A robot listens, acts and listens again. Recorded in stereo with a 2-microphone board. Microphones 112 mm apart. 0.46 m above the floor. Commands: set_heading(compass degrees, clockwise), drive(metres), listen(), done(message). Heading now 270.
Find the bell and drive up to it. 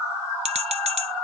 set_heading(345)
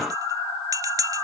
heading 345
set_heading(15)
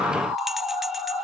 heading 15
listen()
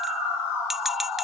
drive(1.0)
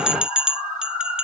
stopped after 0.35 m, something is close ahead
set_heading(25)
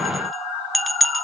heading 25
done("Blocked. The bell is further on, straight ahead.")